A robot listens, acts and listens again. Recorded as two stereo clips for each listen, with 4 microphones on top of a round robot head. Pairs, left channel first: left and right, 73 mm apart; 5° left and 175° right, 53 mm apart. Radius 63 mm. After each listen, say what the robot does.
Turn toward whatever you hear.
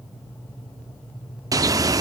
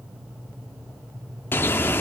Turn 50° right.
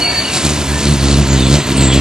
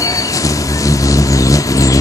Turn 10° right.
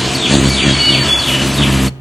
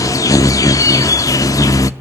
Facing the bird.